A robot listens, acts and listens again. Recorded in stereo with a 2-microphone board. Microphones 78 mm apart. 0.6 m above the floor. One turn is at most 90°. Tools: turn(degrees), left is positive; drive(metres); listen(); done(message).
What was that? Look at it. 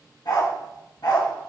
turn(degrees=70)
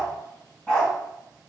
turn(degrees=10)
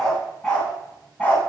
turn(degrees=20)
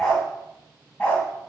turn(degrees=15)
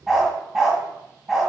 done("Facing the dog barking.")